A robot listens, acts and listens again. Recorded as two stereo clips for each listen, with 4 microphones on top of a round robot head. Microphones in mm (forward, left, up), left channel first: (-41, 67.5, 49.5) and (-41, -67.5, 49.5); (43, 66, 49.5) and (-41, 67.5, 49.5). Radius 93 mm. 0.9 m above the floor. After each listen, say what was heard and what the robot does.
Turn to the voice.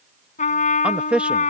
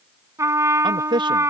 The man speaking: 170° right. Turn 170° right.
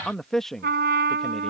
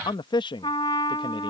Facing the man speaking.